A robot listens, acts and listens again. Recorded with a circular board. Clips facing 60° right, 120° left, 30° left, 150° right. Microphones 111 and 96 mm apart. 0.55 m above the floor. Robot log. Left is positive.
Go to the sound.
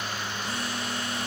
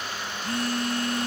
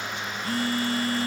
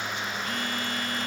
note: The phone buzzing: 85° left.
cmd yaw +85
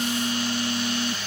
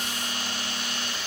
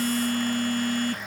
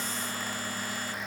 cmd fwd 1.0
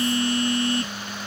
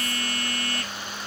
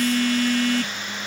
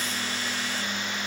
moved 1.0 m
cmd fwd 1.0
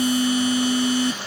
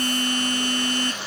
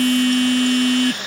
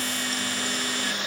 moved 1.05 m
note: The phone buzzing is now 20° left.
cmd yaw +20
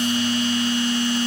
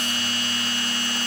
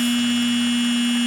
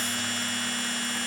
note: The phone buzzing is now 10° left.
cmd yaw +10
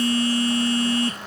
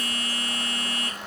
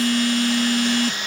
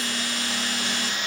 cmd fwd 1.0
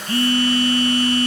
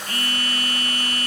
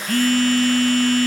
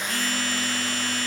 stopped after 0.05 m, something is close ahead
end: I am next to the phone buzzing.